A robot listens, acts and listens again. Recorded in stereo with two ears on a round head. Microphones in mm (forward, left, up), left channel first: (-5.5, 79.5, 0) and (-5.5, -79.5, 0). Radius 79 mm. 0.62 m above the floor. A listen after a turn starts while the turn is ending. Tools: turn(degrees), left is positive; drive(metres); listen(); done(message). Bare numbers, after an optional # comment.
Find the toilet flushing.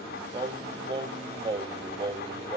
listen()
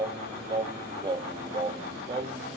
listen()
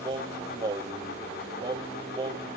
done("I can't make out a toilet flushing to turn to.")